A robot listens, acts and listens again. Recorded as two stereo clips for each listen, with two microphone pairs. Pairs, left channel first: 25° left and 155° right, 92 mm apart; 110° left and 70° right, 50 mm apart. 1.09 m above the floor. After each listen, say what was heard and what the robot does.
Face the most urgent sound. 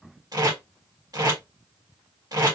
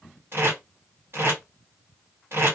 Keep listening.
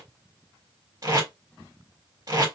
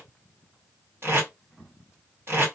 Keep listening.
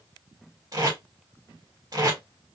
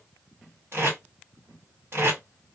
I can't make out anything urgent to turn to.